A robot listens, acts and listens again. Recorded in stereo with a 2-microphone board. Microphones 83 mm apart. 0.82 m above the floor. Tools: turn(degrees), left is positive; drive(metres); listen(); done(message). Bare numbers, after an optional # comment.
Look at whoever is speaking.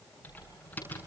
listen()
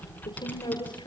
# The woman speaking: about 75° left or 105° left.
turn(75)
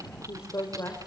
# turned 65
# So it is at 35° left.
turn(35)
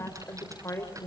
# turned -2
# The woman speaking is now 35° left.
turn(35)
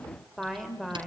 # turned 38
done("Found it: a woman speaking, straight ahead.")